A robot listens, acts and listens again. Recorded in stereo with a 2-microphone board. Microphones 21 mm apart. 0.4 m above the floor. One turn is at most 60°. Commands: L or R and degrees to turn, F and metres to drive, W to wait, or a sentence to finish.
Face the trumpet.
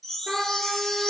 R60
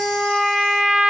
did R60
R45
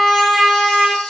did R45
Found it: a trumpet, straight ahead.